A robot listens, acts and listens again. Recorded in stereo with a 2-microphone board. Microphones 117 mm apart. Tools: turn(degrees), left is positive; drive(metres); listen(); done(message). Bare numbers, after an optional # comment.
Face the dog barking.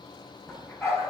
# The dog barking: about 25° left or 155° left.
turn(25)
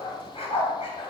# So it is at 120° left.
turn(120)
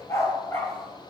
# The dog barking is now 20° left.
turn(20)
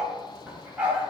# The dog barking is now 15° right.
turn(-15)
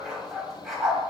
done("Facing the dog barking, 2 to 4 m away.")